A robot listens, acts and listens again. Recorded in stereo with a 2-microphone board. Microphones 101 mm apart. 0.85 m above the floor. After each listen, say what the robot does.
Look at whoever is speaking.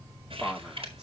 Turn 30° right.
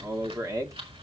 Turn 145° right.
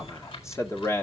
Turn 30° left.
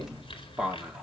Found it: a man speaking, straight ahead, 2 to 4 m away.